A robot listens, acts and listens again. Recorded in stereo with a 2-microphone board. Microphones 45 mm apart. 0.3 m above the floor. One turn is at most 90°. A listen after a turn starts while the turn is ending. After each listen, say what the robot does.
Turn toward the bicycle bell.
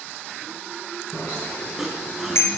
Turn 65° left.
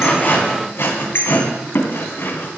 Turn 50° left.
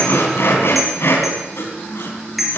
Found it: a bicycle bell, straight ahead, 2 to 4 m away.